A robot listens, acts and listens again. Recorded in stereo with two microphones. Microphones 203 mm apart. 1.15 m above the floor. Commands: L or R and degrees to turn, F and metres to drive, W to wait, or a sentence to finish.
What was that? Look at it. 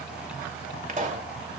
R35
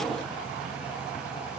W
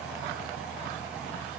I heard a pop, but can't make it out now. It was about straight ahead or 110° right.